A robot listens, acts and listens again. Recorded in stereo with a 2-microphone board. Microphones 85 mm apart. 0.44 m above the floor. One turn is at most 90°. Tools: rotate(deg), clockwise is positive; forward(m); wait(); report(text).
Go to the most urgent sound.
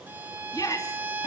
rotate(-40)
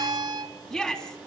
forward(1.0)
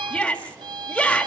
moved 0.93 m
rotate(-10)
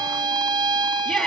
forward(1.0)
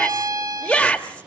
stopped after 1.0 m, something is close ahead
rotate(-15)
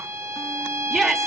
report("I am next to the shout.")